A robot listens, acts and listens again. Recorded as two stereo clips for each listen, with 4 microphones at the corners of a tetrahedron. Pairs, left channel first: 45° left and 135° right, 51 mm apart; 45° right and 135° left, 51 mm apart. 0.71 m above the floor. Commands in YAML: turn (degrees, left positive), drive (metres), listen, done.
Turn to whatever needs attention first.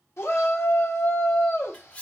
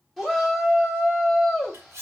turn: 45
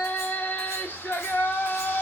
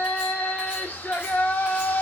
done: "Facing the shout, 1 to 2 m away."